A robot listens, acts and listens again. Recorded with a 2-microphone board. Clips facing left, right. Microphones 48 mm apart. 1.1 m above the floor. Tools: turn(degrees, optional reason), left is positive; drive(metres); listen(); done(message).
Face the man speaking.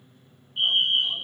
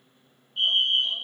listen()
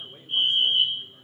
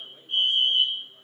listen()
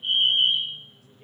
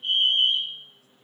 done("I can't make out a man speaking to turn to.")